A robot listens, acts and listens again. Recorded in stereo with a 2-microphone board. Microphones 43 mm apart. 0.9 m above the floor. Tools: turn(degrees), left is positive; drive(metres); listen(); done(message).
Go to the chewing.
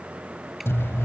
turn(degrees=90)
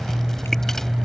turn(degrees=10)
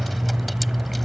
drive(metres=1.0)
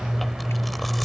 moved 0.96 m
drive(metres=1.0)
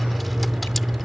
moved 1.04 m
drive(metres=1.0)
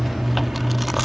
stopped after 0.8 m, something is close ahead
done("Arrived at the chewing, straight ahead.")